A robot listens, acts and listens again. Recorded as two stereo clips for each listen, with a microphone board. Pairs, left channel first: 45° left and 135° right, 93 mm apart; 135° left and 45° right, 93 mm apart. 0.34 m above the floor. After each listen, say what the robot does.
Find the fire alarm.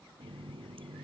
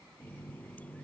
Keep listening.
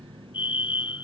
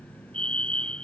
Turn 60° left.
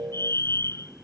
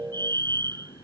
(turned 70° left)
Turn 10° right.
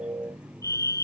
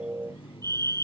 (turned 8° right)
Found it: a fire alarm, straight ahead.